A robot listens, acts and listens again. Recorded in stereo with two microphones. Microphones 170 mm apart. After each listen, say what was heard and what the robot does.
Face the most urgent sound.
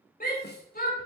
The shout: about 60° left or 120° left. Turn 60° left.
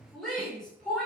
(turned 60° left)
Facing the shout.